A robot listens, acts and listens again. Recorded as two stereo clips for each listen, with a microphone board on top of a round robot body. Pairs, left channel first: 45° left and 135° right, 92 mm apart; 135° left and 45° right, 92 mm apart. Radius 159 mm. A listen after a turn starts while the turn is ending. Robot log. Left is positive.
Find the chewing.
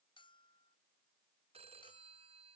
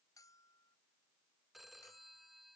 cmd idle
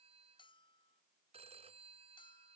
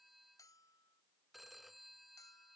cmd idle
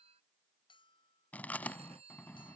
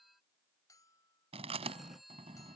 note: The chewing: 30° right.
cmd yaw -30
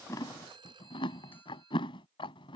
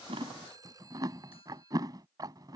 end: Facing the chewing.